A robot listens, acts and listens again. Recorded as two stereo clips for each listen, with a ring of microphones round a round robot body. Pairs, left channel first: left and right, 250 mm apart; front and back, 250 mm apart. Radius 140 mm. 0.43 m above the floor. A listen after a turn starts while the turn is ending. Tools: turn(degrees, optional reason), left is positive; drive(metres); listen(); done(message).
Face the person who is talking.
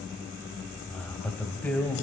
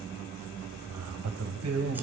turn(degrees=175, reason="The man speaking: 175° left.")
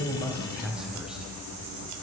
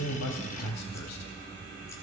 done("Found it: a man speaking, straight ahead.")